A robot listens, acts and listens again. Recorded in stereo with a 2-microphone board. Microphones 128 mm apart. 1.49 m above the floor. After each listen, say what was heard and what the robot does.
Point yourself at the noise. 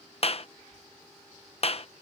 The clap: about 50° left or 130° left. Turn 50° left.
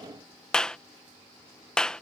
Facing the clap.